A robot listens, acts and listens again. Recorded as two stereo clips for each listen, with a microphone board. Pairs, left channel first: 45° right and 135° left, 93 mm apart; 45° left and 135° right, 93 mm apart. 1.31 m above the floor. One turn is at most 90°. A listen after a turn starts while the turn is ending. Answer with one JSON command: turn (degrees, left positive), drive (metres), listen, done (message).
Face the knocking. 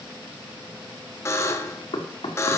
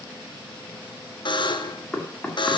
{"turn": -35}
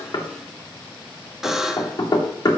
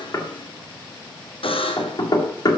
{"done": "Facing the knocking."}